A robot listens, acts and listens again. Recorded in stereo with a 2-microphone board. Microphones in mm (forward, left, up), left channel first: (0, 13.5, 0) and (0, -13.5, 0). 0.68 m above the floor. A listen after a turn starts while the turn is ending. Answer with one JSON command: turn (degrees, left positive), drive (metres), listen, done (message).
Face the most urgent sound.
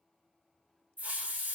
{"listen": true}
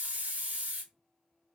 {"listen": true}
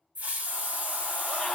{"turn": 20}
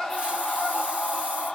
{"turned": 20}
{"turn": 135}
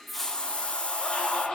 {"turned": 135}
{"turn": 30}
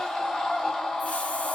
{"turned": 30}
{"turn": 15}
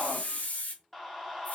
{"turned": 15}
{"done": "Found it: a scream, straight ahead, 1 to 2 m away."}